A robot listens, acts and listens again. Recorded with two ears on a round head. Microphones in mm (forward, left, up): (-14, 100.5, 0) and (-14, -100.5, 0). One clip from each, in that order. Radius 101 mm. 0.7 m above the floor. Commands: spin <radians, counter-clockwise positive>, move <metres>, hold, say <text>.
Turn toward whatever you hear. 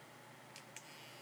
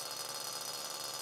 hold
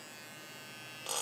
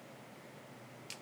hold
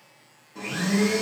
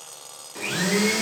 spin -1.57
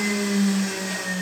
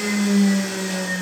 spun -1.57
say Found it: a blender, straight ahead.